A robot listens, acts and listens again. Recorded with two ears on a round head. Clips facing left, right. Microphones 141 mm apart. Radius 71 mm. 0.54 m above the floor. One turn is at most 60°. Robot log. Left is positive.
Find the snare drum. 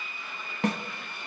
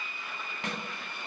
note: The snare drum: about 40° left or 140° left.
cmd yaw +40
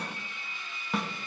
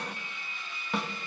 end: Facing the snare drum.